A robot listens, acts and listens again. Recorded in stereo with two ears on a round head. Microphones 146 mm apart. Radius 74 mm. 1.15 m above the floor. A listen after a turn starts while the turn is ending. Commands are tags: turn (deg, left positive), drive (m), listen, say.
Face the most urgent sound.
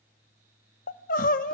<turn deg="55"/>
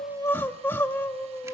<turn deg="15"/>
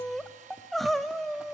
<say>Found it: crying, straight ahead.</say>